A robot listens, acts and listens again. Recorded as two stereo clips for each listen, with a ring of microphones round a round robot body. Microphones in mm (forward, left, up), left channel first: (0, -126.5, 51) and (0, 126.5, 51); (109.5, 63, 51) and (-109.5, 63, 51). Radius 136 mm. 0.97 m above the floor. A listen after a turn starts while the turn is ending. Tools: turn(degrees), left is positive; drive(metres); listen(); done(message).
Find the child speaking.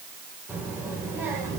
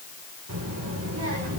turn(degrees=170)
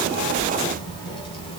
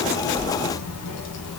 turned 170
turn(degrees=-20)
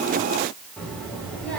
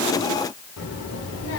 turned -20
done("Facing the child speaking, over 4 m away.")